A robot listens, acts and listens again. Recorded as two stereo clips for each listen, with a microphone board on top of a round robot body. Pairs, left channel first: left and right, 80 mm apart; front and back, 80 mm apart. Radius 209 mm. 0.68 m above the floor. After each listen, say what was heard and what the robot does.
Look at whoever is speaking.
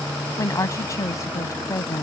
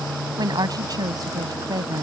The woman speaking: 140° left. Turn 140° left.
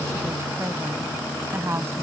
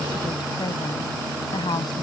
The woman speaking is now 30° right. Turn 30° right.
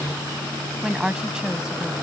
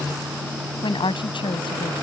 The woman speaking is now 10° right. Turn 10° right.
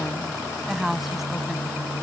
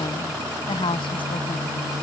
Found it: a woman speaking, straight ahead.